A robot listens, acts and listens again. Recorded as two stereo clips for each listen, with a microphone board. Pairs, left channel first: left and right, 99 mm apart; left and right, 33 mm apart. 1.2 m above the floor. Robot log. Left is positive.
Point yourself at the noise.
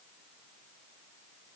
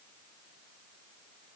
cmd idle
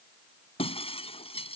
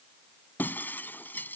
note: The breaking glass: about 75° left or 105° left.
cmd yaw +75
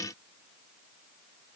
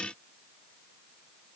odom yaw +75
cmd idle
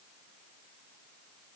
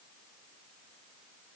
end: I heard breaking glass, but can't make it out now. It was about straight ahead or 30° left.